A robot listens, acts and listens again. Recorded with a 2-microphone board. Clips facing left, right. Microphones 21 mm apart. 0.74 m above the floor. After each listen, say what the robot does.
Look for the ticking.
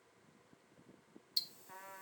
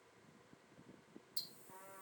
Turn 50° left.
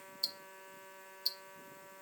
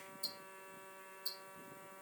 Turn 65° left.
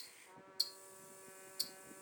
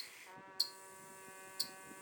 Found it: ticking, straight ahead, under 1 m away.